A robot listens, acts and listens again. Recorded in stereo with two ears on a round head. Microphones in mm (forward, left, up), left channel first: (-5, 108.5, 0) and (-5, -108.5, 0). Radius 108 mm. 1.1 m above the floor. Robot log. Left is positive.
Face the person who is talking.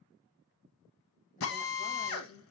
note: The woman speaking: about 40° left or 140° left.
cmd yaw +40
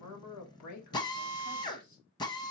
note: So it is at 95° left.
cmd yaw +95
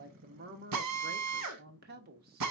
note: The woman speaking is now 40° right.
cmd yaw -40
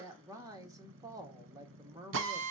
note: The woman speaking is now 15° right.
cmd yaw -15
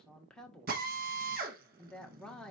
end: Facing the woman speaking, 1 to 2 m away.